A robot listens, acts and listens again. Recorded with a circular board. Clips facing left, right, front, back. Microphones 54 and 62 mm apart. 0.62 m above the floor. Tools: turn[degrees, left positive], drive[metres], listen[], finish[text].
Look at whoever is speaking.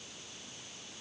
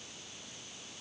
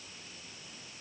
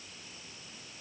Action: listen[]
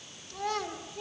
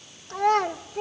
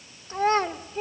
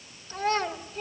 Thought: The child speaking: 55° right.
Action: turn[-55]
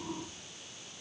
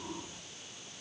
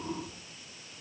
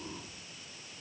Action: listen[]
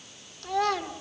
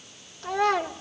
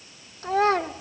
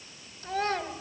Thought: The child speaking is now 20° right.
Action: turn[-20]
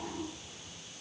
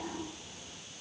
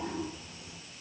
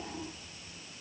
Action: listen[]
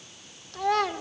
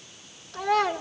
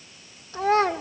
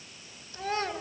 Action: finish[Facing the child speaking.]